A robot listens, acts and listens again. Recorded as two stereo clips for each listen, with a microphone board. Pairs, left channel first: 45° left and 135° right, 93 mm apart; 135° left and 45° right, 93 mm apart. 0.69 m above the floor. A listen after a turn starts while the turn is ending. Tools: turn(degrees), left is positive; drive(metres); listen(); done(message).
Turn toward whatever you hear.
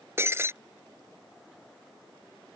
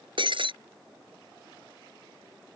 turn(degrees=-70)
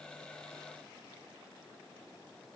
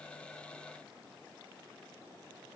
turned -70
done("I heard breaking glass from this way, but can't make it out now.")